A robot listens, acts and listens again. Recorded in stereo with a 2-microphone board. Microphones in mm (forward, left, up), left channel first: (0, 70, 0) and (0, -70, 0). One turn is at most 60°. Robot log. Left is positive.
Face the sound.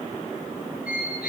cmd yaw +60
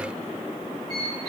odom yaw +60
note: So it is at 25° left.
cmd yaw +25
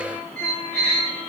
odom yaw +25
end: Facing the squeak.